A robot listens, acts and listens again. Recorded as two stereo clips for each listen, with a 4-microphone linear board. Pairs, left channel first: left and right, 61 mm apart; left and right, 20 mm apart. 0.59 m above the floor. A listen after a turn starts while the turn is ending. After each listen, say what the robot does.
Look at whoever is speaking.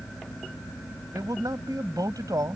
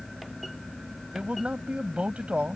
Turn 75° right.
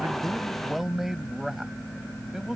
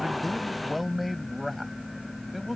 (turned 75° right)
Found it: a man speaking, straight ahead.